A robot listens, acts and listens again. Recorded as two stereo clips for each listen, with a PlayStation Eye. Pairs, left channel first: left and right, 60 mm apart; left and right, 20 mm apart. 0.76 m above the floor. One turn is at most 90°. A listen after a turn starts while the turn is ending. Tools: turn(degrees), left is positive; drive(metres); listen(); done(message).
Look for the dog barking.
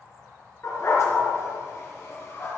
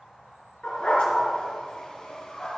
turn(degrees=45)
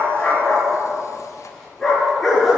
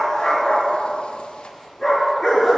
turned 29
done("Found it: a dog barking, straight ahead.")